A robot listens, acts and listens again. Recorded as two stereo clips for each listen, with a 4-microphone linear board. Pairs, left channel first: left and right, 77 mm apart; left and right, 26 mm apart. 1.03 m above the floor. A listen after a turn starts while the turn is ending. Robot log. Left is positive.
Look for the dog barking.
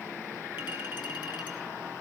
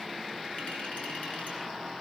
cmd idle
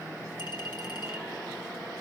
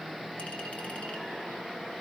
cmd idle
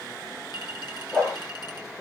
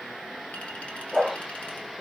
cmd yaw +30
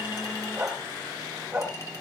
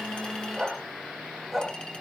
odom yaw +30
note: So it is at 15° right.
cmd yaw -15
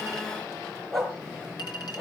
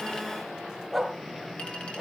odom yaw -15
end: Facing the dog barking, over 4 m away.